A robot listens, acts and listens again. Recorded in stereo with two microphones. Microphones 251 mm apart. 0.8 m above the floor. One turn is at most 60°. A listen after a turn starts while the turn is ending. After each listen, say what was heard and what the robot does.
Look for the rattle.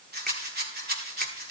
The rattle: about 40° right or 140° right. Turn 40° right.
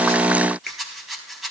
Facing the rattle.